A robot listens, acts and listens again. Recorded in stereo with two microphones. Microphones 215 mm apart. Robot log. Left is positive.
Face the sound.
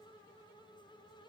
cmd idle
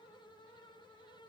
cmd idle
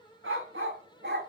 note: The dog barking: about 60° right or 120° right.
cmd yaw -60
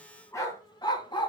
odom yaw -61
note: So it is at 25° left.
cmd yaw +25
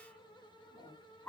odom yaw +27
note: The dog barking is now 10° left.
cmd yaw +10
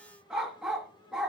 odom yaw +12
end: Found it: a dog barking, straight ahead.